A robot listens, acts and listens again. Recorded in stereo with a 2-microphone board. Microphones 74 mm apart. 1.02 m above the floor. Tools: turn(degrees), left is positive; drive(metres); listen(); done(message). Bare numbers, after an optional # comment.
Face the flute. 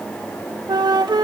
turn(-90)
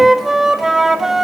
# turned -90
done("Facing the flute, 1 to 2 m away.")